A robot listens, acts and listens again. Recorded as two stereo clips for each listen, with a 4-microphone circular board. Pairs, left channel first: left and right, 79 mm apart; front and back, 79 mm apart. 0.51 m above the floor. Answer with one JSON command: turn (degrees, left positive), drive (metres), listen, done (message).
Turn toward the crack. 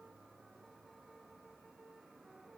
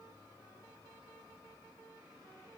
{"listen": true}
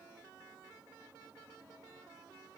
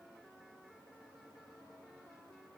{"listen": true}
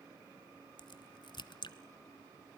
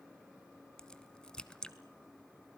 {"turn": 80}
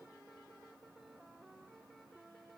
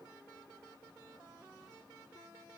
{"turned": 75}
{"done": "Facing where the crack came from. I can't hear it now."}